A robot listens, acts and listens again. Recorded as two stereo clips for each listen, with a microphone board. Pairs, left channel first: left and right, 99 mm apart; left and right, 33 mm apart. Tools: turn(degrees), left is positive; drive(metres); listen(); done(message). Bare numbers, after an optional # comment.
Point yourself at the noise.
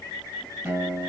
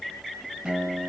# The guitar: about 25° right or 155° right.
turn(-25)
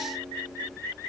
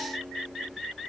listen()
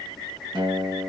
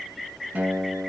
# So it is at 130° right.
turn(-130)
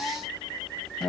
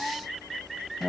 done("Found it: a guitar, straight ahead.")